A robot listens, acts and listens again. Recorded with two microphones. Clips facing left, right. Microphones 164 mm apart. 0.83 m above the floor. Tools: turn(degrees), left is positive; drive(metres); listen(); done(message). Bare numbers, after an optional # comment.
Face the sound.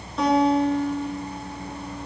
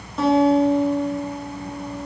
turn(30)
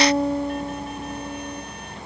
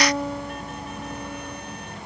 # So it is at 150° left.
turn(150)
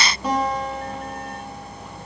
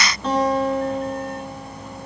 # The guitar is now 10° left.
turn(10)
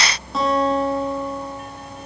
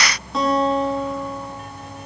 done("Found it: a guitar, straight ahead, over 4 m away.")